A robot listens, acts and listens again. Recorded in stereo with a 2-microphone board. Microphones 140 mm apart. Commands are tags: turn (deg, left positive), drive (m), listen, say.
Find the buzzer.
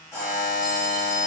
<turn deg="30"/>
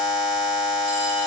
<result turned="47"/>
<turn deg="-50"/>
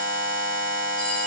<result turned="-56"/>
<turn deg="10"/>
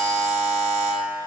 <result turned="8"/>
<say>Facing the buzzer, 1 to 2 m away.</say>